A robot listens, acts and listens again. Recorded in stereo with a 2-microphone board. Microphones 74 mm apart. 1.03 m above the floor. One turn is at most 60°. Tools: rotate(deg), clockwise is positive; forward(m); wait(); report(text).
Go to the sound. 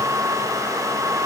wait()
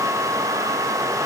wait()
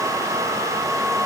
report("I can't make out anything.")